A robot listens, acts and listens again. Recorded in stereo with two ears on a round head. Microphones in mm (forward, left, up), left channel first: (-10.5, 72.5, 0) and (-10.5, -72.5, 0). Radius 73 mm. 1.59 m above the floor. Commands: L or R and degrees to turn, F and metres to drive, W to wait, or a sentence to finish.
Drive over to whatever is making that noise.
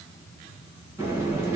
R20
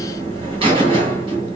R145
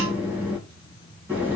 R10
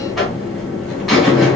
F1.0
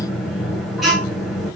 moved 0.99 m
F1.0
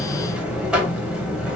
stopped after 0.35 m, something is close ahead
Arrived at the buzzer, straight ahead.